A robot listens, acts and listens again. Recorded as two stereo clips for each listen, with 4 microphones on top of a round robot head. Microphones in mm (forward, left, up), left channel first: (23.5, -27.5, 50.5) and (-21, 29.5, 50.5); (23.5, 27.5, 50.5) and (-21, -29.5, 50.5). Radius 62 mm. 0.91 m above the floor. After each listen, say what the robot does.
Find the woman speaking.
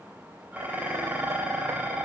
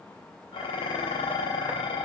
Keep listening.
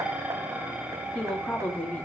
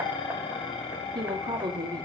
Turn 120° right.
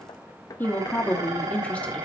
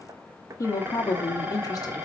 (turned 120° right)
Turn 20° left.
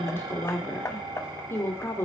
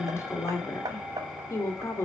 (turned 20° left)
Facing the woman speaking.